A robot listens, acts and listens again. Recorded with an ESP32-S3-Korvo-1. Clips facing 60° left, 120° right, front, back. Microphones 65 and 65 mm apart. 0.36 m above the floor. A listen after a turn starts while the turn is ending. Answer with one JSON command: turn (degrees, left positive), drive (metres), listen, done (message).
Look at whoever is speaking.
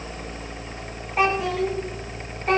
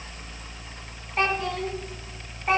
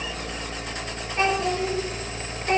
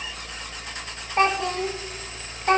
{"turn": 155}
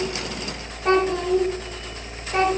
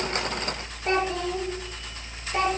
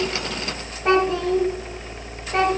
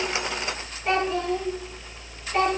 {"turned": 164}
{"turn": 30}
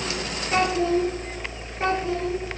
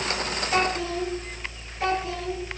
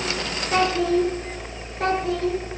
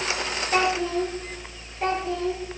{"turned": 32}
{"done": "Found it: a child speaking, straight ahead, 2 to 4 m away."}